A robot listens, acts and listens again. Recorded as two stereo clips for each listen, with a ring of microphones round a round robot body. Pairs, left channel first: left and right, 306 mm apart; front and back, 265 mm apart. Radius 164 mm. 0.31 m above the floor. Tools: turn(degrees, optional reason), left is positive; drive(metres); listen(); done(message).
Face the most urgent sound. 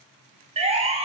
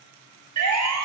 turn(degrees=-160, reason="The siren: 160° right.")
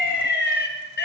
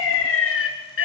turn(degrees=35, reason="The siren is now 35° left.")
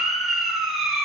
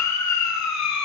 done("Facing the siren, 2 to 4 m away.")